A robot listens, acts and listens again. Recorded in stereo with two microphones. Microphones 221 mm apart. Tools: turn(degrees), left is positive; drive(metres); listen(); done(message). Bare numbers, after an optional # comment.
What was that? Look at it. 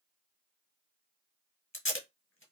# The tape being pulled: about 70° left or 110° left.
turn(70)
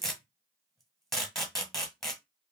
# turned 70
done("Facing the tape being pulled, 1 to 2 m away.")